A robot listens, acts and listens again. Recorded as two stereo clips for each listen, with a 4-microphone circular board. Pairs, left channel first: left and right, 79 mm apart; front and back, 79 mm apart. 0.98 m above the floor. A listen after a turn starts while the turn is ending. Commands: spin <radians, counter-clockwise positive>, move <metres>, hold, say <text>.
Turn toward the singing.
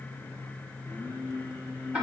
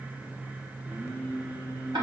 spin 2.97
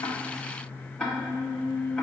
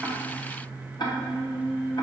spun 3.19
say Found it: singing, straight ahead, 2 to 4 m away.